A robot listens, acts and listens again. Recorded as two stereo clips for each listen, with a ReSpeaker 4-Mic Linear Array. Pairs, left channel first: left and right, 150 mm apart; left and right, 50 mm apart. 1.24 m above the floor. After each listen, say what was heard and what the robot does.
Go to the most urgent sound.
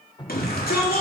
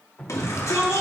Turn 90° left.
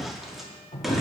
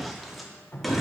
Drive 1.0 m forward.
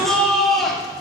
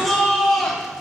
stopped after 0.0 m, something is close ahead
Blocked. The shout is further on, straight ahead.